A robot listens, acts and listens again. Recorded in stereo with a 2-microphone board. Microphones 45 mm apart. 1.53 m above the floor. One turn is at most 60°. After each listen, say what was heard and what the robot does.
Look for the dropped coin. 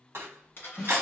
The dropped coin: about 50° left or 130° left. Turn 50° left.
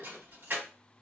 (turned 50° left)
Keep listening.
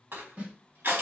I heard a dropped coin, but can't make it out now. It was about straight ahead or 80° left.